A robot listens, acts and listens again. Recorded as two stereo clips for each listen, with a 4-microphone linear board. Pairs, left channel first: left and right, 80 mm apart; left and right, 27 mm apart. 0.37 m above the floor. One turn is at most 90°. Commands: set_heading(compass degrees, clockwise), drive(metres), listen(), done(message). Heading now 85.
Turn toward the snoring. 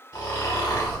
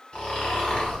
set_heading(35)
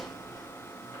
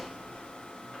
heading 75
listen()
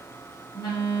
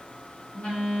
listen()
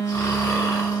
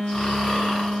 set_heading(40)
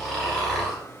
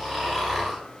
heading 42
done("Found it: snoring, straight ahead.")